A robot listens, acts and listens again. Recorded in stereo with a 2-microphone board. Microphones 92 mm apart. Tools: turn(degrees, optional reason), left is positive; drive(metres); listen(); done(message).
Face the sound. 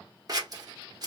turn(degrees=-45, reason="The scissors: about 45° right or 135° right.")
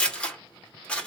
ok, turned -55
turn(degrees=10, reason="So it is at 10° left.")
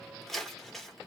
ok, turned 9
done("Facing the scissors, 1 to 2 m away.")